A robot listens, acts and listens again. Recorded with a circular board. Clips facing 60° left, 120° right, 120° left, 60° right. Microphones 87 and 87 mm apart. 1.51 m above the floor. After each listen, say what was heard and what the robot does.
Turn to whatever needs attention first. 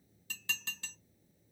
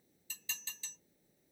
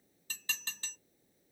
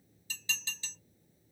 Keep listening.
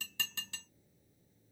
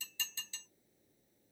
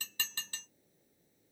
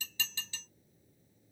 Keep listening.
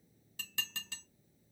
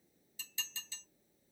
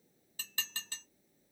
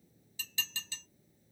I can't make out anything urgent, only dishes clattering.